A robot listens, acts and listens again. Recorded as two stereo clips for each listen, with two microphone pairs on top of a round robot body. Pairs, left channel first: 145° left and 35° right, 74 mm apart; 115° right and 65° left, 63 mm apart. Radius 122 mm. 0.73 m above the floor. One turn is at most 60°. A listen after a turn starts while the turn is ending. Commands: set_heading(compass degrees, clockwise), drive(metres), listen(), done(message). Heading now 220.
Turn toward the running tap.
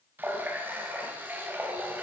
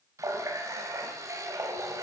set_heading(195)
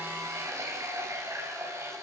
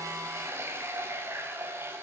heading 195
set_heading(185)
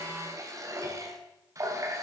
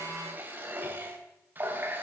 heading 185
done("Found it: a running tap, straight ahead.")